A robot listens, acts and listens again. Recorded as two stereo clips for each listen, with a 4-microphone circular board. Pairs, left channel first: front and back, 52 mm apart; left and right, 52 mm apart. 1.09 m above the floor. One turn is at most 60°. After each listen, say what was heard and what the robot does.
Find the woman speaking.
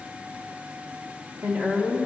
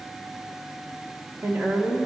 The woman speaking: 125° right. Turn 60° right.
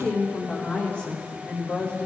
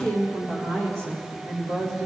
The woman speaking is now 65° right. Turn 60° right.
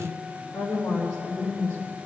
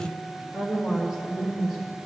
Found it: a woman speaking, straight ahead.